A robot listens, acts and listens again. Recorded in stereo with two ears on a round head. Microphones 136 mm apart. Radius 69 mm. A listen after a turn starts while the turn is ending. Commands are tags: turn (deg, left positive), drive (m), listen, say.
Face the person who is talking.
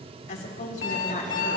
<turn deg="50"/>
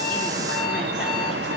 <listen/>
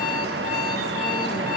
<listen/>
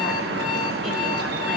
<say>I heard a woman speaking, but can't make it out now. It was about straight ahead or 80° left.</say>